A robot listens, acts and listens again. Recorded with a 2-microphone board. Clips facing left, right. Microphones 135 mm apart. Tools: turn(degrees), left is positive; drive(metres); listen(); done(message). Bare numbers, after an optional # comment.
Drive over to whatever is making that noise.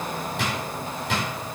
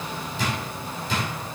# The drawer: about 60° left or 120° left.
turn(60)
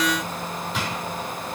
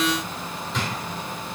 drive(1.0)
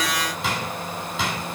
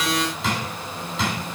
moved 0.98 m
drive(1.0)
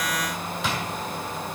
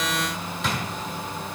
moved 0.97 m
drive(1.0)
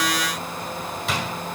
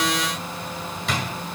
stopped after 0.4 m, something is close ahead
done("Arrived at the drawer, straight ahead.")